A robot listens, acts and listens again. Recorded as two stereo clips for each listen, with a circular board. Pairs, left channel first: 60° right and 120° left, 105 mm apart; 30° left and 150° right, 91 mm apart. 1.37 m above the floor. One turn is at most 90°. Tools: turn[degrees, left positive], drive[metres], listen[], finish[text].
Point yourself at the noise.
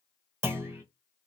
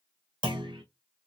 Thought: The clunk: 175° right.
Action: turn[-90]
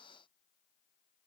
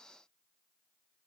Thought: Nothing new. It was at 85° right.
Action: turn[-85]
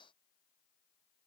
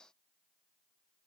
Action: finish[I heard a clunk from this way, but can't make it out now.]